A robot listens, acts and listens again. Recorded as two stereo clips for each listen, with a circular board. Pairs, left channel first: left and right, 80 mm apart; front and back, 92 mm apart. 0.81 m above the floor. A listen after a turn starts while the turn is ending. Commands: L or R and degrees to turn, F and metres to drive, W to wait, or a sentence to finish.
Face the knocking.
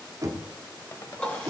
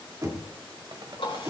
R130
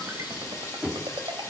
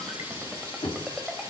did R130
Found it: knocking, straight ahead.